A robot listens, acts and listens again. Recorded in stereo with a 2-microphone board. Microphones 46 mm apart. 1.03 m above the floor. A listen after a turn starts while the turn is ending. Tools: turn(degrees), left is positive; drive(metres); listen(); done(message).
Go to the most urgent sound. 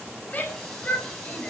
turn(degrees=30)
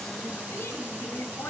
turn(degrees=120)
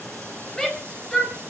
turn(degrees=15)
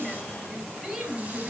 drive(metres=1.0)
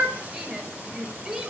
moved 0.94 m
turn(degrees=-10)
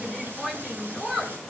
drive(metres=1.0)
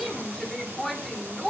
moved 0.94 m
drive(metres=1.0)
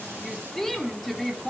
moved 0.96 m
drive(metres=1.0)
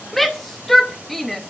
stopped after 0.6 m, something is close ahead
done("Arrived at the shout, straight ahead.")